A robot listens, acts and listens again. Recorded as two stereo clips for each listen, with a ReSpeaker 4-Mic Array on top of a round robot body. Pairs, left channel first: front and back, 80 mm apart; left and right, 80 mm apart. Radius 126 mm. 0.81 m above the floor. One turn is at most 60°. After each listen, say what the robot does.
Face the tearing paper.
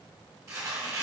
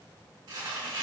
Turn 60° right.
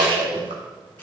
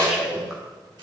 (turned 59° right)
Turn 60° right.
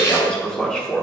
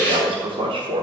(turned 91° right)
Turn 20° left.
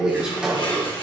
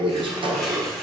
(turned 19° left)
I heard tearing paper from this way, but can't make it out now.